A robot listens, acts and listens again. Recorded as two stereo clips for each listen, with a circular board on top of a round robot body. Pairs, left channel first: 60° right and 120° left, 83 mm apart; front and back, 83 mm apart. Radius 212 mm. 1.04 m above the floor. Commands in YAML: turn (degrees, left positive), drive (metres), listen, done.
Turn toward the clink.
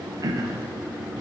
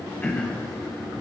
listen: true
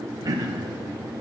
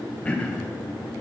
listen: true
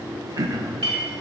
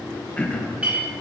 turn: 105
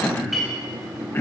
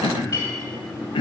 turn: 35
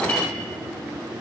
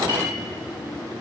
listen: true
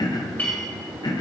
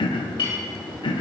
turn: 10
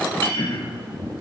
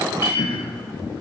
done: "Found it: a clink, straight ahead, 2 to 4 m away."